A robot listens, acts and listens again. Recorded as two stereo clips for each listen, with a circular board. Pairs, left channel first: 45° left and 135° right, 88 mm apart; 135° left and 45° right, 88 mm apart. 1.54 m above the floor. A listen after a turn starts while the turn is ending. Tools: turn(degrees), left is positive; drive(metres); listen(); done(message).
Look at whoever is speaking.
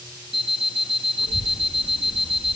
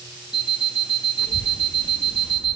turn(degrees=-155)
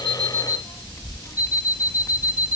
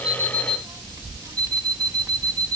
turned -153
done("Facing the child speaking, 1 to 2 m away.")